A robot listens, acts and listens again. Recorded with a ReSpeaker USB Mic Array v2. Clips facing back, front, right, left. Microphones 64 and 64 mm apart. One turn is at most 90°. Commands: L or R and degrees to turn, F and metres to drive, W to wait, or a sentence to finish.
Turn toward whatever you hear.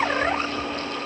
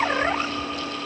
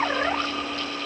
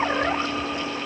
W
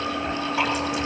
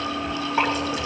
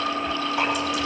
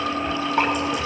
L50
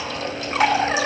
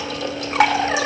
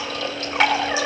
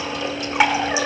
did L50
L15
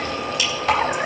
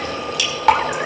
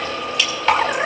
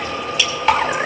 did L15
Facing the dripping, 2 to 4 m away.